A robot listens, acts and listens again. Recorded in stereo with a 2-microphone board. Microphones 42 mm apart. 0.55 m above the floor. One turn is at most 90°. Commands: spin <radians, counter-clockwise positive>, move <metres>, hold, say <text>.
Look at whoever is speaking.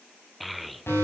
spin 0.52
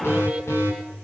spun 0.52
hold
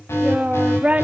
spin -0.52
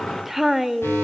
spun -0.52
say Facing the child speaking, under 1 m away.